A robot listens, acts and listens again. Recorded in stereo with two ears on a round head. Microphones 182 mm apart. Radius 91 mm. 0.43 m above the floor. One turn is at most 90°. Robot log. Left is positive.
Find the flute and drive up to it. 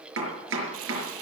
cmd idle
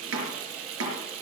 cmd idle
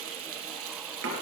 end: I can't make out a flute to turn to.